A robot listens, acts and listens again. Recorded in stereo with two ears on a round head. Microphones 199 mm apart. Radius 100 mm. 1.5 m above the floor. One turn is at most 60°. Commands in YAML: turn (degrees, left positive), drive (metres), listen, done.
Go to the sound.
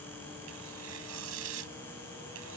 turn: -60
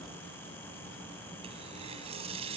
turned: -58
turn: -30
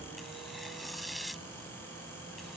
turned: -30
drive: 1.0
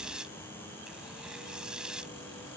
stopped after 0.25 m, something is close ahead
done: "Blocked. The tearing paper is further on, straight ahead."